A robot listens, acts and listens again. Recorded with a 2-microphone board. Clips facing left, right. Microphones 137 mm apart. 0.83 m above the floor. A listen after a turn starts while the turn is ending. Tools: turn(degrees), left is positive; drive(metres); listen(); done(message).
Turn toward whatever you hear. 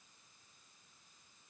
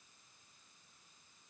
listen()
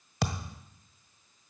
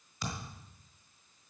turn(degrees=75)
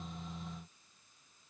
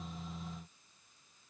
listen()
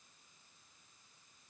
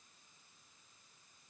done("I heard a thud, but can't make it out now. It was about straight ahead or 30° left.")